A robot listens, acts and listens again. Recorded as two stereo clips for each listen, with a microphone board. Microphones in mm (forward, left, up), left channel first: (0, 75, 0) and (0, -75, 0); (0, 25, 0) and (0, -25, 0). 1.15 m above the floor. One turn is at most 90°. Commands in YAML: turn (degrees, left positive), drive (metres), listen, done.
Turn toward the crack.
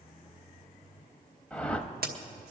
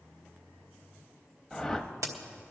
turn: -90
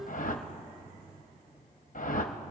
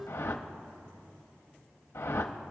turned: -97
done: "I heard a crack from this way, but can't make it out now."